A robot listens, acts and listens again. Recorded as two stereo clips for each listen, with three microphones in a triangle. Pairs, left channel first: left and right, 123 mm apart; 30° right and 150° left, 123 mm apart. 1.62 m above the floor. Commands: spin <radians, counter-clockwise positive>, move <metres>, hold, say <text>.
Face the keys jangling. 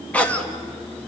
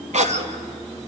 hold
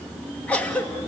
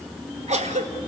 hold
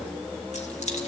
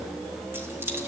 spin 1.40
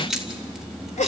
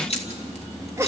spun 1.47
say Facing the keys jangling, 2 to 4 m away.